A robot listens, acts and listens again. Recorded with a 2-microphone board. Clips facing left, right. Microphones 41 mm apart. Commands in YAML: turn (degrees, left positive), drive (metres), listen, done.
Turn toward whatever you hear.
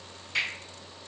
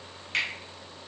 turn: -75
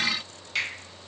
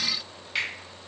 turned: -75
turn: -15
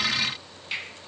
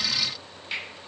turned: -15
done: "Found it: a finger snap, straight ahead."